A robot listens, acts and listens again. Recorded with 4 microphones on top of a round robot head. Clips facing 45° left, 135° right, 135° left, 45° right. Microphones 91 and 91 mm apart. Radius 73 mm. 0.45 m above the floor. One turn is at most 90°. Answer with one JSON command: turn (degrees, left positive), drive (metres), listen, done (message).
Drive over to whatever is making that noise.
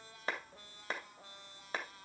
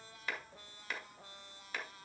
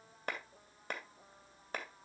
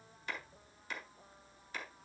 {"turn": 90}
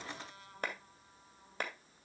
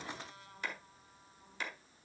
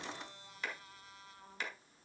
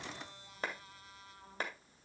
{"drive": 1.0}
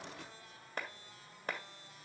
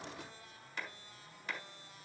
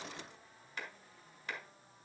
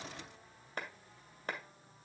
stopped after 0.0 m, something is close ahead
{"done": "Something is in my way. I am facing the clap but have not reached it."}